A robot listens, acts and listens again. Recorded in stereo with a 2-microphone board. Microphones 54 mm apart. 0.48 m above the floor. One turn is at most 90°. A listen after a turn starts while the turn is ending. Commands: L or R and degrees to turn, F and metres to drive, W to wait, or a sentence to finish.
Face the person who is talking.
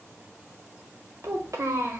R70
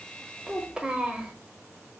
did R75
R20
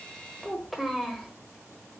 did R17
Facing the child speaking, 1 to 2 m away.